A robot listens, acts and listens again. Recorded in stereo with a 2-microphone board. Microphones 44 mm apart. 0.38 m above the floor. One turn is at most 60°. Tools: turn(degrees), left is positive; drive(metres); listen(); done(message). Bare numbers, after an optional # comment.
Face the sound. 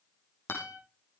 # The guitar: about 65° left or 115° left.
turn(60)
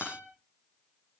# So it is at 55° left.
turn(55)
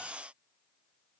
listen()
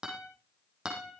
# The guitar is now 20° right.
turn(-20)
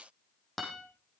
done("Facing the guitar.")